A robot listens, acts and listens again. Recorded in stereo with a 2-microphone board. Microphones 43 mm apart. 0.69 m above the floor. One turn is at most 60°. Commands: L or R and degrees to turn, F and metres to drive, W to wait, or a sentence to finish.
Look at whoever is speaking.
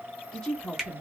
L25
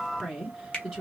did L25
Found it: a woman speaking, straight ahead.